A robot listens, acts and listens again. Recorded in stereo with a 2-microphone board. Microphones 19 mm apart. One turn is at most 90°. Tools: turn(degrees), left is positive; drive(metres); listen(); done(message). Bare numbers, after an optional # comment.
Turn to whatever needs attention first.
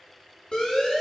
# The siren: about 65° left or 115° left.
turn(65)
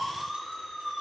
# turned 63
done("Facing the siren.")